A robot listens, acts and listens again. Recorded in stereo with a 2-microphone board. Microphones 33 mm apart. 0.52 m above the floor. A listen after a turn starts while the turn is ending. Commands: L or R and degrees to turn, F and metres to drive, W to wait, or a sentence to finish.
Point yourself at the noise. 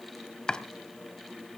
L20
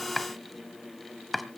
Facing the chopping, 1 to 2 m away.